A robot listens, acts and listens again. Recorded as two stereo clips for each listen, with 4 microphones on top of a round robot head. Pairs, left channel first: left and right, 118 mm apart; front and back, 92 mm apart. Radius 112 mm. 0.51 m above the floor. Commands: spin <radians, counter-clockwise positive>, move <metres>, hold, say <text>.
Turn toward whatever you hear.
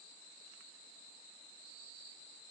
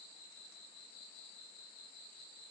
hold
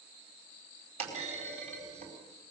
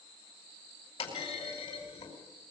spin -0.96
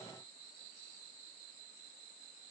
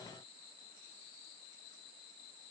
say I heard a clunk from this way, but can't make it out now.